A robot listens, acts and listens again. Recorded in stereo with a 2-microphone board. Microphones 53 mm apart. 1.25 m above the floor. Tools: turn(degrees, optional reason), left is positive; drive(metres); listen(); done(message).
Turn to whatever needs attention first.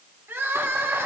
turn(degrees=-50, reason="The crying: about 50° right or 130° right.")
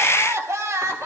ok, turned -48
turn(degrees=-80, reason="So it is at 80° right.")
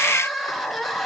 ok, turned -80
done("Facing the crying.")